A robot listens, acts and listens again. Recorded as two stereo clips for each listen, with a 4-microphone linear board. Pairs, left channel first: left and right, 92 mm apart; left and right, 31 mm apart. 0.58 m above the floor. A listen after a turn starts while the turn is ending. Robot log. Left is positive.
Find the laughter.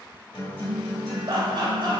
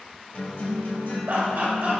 note: The laughter: about 55° right or 125° right.
cmd yaw -55
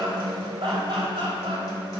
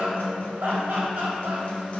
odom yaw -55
note: So it is at 70° right.
cmd yaw -70
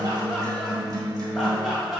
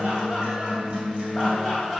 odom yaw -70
end: Facing the laughter, 2 to 4 m away.